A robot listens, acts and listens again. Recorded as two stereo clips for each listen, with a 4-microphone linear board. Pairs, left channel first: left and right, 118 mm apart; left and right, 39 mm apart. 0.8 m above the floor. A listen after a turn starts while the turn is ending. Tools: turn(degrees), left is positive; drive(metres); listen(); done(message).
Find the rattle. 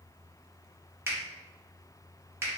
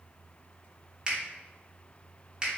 listen()
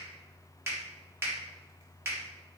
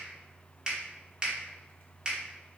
listen()
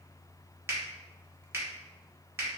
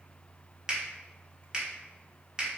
done("I can't make out a rattle to turn to.")